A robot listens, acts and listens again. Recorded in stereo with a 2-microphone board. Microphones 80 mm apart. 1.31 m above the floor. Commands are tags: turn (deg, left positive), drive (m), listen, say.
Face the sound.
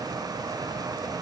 <listen/>
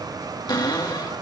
<turn deg="60"/>
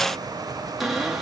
<say>Found it: a cupboard door, straight ahead, 2 to 4 m away.</say>